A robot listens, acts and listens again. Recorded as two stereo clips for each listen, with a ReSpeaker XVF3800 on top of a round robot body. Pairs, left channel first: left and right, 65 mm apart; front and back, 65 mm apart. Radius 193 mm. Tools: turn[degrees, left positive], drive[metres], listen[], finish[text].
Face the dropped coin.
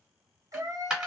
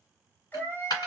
Thought: The dropped coin: 10° right.
Action: turn[-10]
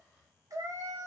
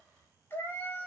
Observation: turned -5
Action: finish[Facing where the dropped coin came from. I can't hear it now.]